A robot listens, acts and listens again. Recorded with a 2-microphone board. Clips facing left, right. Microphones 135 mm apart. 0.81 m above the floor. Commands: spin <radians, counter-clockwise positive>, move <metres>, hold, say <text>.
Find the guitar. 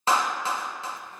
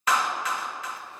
hold
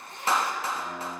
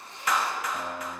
spin -1.22
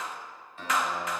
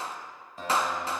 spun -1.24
spin -0.70
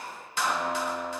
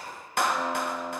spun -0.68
say Found it: a guitar, straight ahead.